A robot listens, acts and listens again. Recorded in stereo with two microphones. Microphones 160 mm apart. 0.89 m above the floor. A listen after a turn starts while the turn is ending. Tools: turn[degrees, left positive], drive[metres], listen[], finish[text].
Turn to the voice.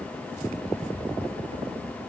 Action: listen[]
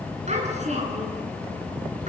Thought: The child speaking: about 45° right or 135° right.
Action: turn[-45]
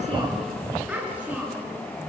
Thought: So it is at 10° right.
Action: turn[-10]
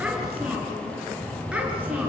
Action: listen[]
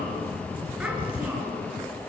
Action: listen[]
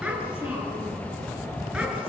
Action: finish[Found it: a child speaking, straight ahead.]